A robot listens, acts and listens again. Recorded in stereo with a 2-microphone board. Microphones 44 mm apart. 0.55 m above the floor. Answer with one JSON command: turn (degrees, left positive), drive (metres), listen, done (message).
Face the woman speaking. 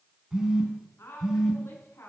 {"turn": 90}
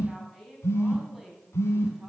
{"done": "Found it: a woman speaking, straight ahead."}